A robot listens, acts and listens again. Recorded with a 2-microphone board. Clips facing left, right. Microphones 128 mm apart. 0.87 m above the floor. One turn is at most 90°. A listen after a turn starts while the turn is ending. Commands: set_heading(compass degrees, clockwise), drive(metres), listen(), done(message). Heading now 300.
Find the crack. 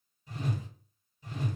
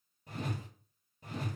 listen()
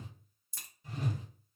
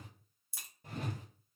set_heading(330)
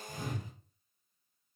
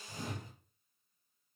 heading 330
listen()
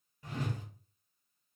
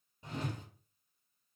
done("I heard a crack, but can't make it out now. It was about 25° left or 145° right.")